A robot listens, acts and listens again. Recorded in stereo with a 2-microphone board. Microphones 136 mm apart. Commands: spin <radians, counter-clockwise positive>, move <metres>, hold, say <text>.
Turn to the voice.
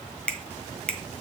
hold
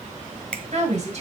spin -0.96
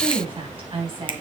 spin -0.87
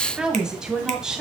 say Facing the woman speaking, 2 to 4 m away.